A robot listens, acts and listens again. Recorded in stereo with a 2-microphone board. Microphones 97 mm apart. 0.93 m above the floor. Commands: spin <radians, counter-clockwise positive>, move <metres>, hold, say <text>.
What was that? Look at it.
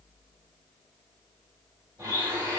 spin -0.70
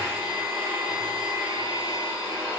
spin -1.83
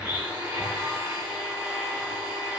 spin -0.26
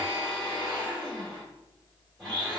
say Found it: a blender, straight ahead.